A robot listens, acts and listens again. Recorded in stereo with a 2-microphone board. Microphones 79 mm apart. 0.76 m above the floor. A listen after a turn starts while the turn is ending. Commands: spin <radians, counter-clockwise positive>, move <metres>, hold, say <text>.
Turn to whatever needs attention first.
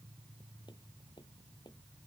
hold
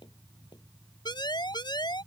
spin 1.13
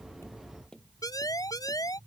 spin 0.87
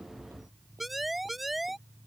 say Facing the siren.